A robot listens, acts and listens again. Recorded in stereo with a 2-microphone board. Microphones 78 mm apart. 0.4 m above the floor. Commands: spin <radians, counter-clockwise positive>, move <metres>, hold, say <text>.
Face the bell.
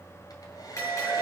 spin 0.70
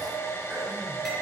hold
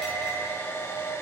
say Facing the bell, over 4 m away.